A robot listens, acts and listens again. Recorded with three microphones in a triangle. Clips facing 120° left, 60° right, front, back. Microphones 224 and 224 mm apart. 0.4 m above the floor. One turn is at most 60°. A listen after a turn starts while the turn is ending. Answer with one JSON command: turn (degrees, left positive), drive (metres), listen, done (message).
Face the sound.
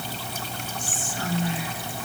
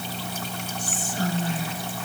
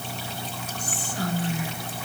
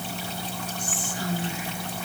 {"turn": -15}
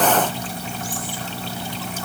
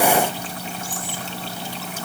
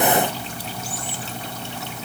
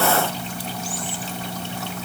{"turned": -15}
{"listen": true}
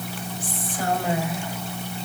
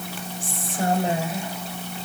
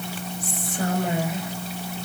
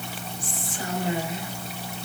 {"done": "Found it: whispering, straight ahead."}